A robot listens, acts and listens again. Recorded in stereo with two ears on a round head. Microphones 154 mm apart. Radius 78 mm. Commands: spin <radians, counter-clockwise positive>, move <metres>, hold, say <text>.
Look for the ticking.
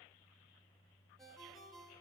hold
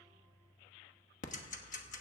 spin 0.79
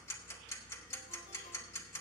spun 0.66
spin 0.35
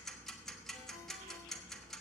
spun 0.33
say Found it: ticking, straight ahead.